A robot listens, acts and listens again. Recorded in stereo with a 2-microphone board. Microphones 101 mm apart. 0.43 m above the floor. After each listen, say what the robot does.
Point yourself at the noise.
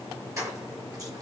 Turn 35° right.
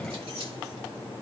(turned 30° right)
Turn 110° right.
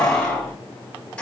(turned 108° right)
Turn 15° left.
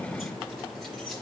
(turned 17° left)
Keep listening.
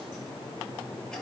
Keep listening.
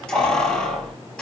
Found it: keys jangling, straight ahead, over 4 m away.